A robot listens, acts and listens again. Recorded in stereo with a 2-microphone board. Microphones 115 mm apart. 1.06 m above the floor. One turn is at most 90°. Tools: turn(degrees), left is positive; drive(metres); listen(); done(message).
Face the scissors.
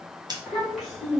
turn(degrees=-40)
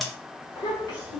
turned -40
listen()
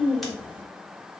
listen()
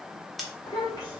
done("Facing the scissors, under 1 m away.")